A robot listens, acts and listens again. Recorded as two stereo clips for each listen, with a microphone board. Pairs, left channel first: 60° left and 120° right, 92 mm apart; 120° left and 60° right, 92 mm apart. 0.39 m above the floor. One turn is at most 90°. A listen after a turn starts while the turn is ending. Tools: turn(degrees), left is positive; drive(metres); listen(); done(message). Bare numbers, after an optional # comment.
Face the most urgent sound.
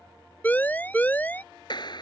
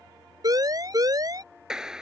# The siren: 10° right.
turn(-10)
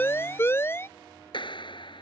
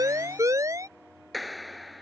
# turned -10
done("Found it: a siren, straight ahead.")